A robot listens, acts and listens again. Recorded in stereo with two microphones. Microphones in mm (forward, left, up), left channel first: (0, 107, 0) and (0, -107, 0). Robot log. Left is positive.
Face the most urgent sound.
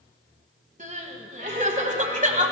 note: The crying: about 35° right or 145° right.
cmd yaw -35
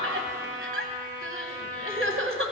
note: So it is at 110° right.
cmd yaw -110
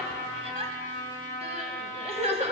note: The crying is now 30° right.
cmd yaw -30
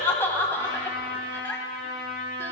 note: The crying is now 10° left.
cmd yaw +10
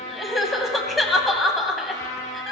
end: Found it: crying, straight ahead.